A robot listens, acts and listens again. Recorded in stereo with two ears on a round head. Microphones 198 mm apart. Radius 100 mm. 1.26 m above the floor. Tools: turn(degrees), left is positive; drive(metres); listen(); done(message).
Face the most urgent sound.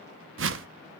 listen()
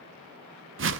listen()
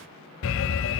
turn(degrees=60)
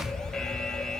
done("Found it: an alarm, straight ahead.")